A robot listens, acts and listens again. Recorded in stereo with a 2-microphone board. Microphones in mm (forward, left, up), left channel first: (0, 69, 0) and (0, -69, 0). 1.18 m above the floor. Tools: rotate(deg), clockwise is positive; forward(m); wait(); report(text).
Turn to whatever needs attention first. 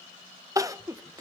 rotate(25)
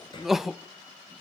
report("Facing the crying, under 1 m away.")